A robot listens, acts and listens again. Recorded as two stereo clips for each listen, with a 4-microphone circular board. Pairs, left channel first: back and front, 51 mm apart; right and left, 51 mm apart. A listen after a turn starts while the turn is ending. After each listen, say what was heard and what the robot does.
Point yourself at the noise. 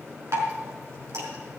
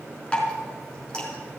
The dripping: 20° right. Turn 20° right.
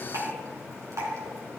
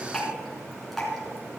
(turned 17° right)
Facing the dripping.